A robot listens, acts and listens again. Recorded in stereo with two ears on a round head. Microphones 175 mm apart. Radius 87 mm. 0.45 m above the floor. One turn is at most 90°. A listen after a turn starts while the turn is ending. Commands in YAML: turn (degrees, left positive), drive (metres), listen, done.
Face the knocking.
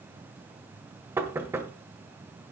turn: -30
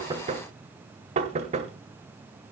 turn: -90
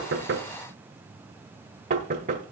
turn: -50
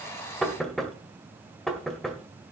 done: "Facing the knocking."